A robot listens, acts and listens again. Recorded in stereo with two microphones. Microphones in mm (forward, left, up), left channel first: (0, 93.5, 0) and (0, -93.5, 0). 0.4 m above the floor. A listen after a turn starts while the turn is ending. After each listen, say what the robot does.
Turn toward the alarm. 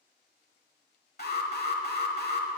Turn 60° left.
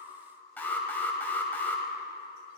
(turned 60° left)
Turn 10° left.
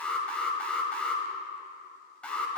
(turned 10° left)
Facing the alarm, 1 to 2 m away.